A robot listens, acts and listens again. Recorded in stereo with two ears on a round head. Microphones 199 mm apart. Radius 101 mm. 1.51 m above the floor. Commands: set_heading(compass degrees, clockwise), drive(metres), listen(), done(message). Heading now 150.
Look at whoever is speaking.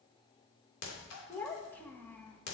set_heading(120)
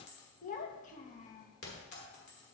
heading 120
set_heading(340)
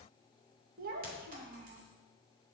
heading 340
set_heading(25)
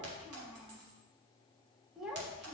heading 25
done("Found it: a child speaking, straight ahead, 1 to 2 m away.")